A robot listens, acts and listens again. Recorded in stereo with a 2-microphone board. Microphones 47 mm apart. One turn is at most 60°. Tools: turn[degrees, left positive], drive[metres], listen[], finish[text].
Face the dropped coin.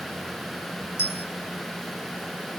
Thought: The dropped coin: about 70° left or 110° left.
Action: turn[60]
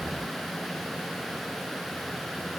Action: listen[]
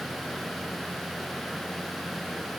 Action: finish[I heard a dropped coin, but can't make it out now. It was about 10° left or 50° left.]